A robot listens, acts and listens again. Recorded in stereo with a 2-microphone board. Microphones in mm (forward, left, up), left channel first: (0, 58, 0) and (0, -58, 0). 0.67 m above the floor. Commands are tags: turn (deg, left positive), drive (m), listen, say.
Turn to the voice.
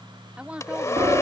<turn deg="-30"/>
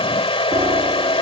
<listen/>
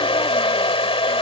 <listen/>
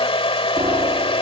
<say>I heard a woman speaking, but can't make it out now. It was about 20° left or 140° right.</say>